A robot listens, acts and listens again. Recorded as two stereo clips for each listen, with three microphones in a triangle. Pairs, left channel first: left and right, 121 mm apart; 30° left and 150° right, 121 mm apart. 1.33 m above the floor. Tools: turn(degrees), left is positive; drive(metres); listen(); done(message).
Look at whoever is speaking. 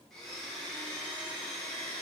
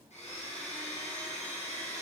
listen()
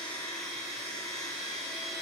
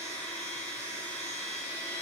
listen()
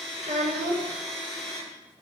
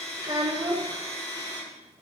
turn(degrees=-95)
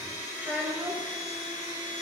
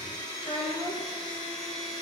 turn(degrees=-15)
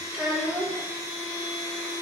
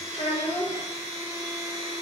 done("Found it: a child speaking, straight ahead.")